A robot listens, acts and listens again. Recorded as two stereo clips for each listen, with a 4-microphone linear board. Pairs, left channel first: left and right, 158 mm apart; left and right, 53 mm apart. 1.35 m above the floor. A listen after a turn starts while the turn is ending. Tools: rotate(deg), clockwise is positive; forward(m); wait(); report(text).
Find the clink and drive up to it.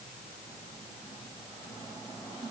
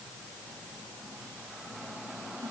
wait()
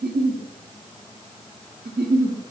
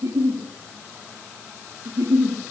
wait()
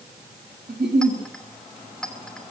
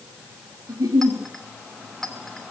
rotate(-30)
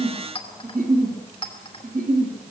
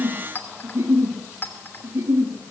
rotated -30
rotate(-145)
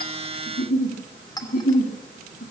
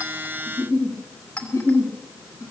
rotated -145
rotate(-25)
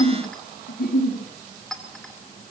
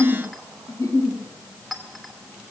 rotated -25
forward(1.0)
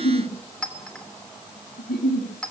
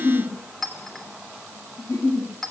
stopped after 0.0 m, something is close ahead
report("Blocked. The clink is further on, straight ahead.")